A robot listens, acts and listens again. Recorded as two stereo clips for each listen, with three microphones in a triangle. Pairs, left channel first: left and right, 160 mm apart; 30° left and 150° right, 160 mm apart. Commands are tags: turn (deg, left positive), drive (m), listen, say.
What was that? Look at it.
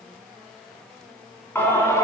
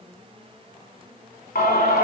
<turn deg="20"/>
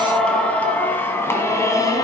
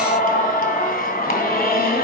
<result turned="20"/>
<turn deg="25"/>
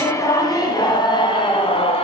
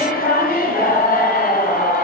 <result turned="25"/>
<turn deg="40"/>
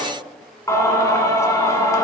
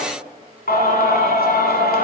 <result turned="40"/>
<turn deg="20"/>
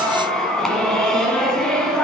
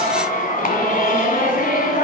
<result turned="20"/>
<say>Found it: singing, straight ahead, 1 to 2 m away.</say>